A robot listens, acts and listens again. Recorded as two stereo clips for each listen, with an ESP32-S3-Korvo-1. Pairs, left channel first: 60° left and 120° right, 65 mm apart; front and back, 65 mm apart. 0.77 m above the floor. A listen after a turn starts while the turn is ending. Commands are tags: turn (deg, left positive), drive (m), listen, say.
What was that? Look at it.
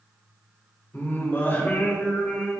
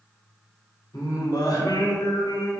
<turn deg="-10"/>
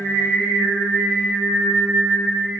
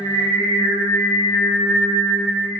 <turn deg="-40"/>
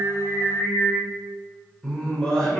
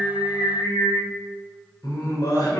<turn deg="-20"/>
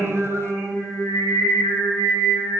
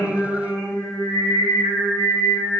<say>Facing the singing.</say>